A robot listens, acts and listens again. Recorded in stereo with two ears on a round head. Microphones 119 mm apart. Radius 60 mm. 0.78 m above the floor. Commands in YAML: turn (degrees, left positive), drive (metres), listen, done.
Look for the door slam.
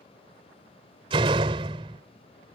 turn: -40
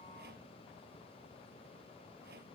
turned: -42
listen: true
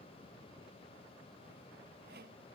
done: "I heard a door slam, but can't make it out now. It was about 5° left or 100° right."